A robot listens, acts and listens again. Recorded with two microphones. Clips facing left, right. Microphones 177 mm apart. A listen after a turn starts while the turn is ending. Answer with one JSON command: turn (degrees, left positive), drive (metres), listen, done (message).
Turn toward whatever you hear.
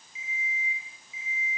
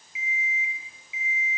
{"turn": -70}
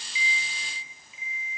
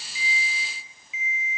{"done": "Found it: an alarm clock, straight ahead, 2 to 4 m away."}